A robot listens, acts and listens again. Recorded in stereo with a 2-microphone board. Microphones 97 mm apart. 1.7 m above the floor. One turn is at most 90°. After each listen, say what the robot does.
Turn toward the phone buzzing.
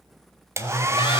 Turn 55° left.
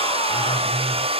Facing the phone buzzing.